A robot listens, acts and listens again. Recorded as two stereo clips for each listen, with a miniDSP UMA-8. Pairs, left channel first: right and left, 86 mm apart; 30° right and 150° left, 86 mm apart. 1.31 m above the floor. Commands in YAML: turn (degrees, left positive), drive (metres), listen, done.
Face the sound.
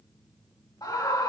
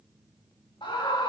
turn: -45
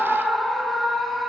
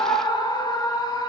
done: "Found it: a scream, straight ahead, 2 to 4 m away."